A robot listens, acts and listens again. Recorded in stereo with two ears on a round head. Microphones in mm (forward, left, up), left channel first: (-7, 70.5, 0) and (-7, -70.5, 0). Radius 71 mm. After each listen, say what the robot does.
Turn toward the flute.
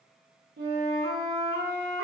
Turn 70° right.
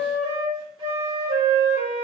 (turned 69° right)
Turn 25° right.
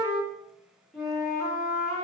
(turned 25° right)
Facing the flute, under 1 m away.